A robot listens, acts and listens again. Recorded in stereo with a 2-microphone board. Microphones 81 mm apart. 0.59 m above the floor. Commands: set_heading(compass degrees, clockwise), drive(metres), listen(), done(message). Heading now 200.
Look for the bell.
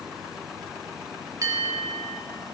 set_heading(245)
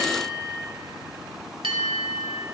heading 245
set_heading(340)
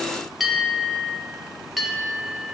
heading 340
done("Found it: a bell, straight ahead, under 1 m away.")